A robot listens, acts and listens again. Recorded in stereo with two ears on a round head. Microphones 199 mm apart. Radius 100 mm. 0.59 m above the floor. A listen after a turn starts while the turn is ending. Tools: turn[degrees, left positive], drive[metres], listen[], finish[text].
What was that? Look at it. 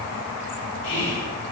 Thought: The whispering: about 60° left or 120° left.
Action: turn[60]
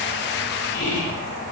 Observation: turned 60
Thought: So it is at 55° left.
Action: turn[55]
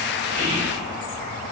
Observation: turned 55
Action: finish[Found it: whispering, straight ahead.]